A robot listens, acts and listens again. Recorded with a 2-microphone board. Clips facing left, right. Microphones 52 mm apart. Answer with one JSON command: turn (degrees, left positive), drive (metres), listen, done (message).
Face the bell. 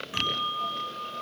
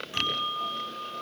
{"turn": 30}
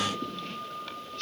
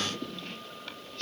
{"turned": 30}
{"turn": 135}
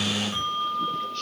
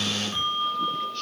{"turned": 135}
{"turn": 10}
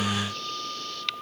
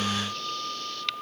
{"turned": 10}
{"done": "Facing the bell, over 4 m away."}